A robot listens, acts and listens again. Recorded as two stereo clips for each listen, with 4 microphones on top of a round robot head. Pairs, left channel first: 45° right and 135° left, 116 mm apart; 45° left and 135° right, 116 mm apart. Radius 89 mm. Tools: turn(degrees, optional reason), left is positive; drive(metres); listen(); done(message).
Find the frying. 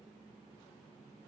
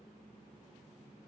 listen()
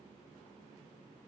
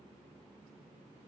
listen()
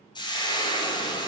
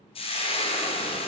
done("Facing the frying, 1 to 2 m away.")